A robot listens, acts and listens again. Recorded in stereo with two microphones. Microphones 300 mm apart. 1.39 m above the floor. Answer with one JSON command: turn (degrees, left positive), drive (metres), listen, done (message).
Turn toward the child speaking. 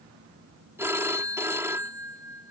{"listen": true}
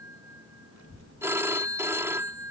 {"turn": 55}
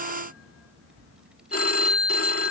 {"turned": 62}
{"done": "Found it: a child speaking, straight ahead."}